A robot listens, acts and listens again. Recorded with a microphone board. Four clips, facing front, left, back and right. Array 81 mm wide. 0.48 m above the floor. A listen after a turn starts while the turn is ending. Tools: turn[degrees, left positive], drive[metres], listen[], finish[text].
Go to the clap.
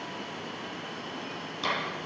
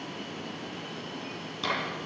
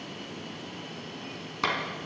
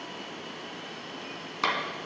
Thought: The clap: 135° right.
Action: turn[-135]
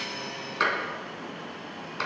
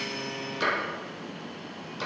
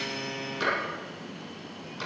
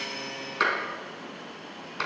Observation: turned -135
Thought: The clap is now 45° right.
Action: turn[-45]
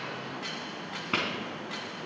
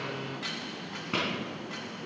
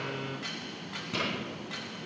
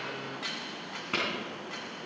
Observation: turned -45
Action: drive[1.0]
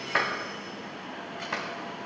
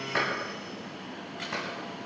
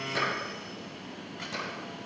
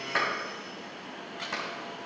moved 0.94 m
Action: drive[1.0]
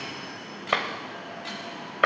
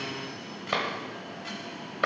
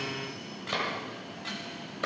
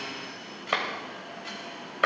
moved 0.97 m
Thought: The clap is now 10° right.
Action: turn[-10]
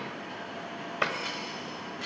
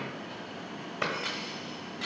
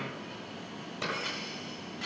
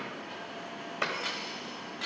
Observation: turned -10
Action: drive[1.0]
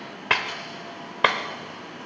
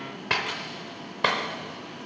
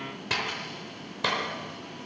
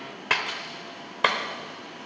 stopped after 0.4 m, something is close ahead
Thought: The clap is now 10° right.
Action: turn[-10]
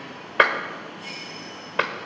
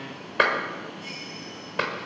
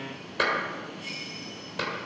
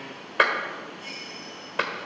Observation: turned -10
Action: finish[Arrived at the clap, straight ahead.]